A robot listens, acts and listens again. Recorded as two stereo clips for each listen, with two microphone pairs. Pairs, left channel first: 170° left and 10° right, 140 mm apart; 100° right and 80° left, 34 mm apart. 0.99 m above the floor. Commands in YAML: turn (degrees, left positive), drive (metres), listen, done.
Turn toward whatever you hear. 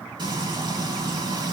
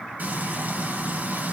turn: 50
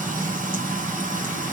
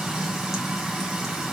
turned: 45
done: "Found it: frying, straight ahead."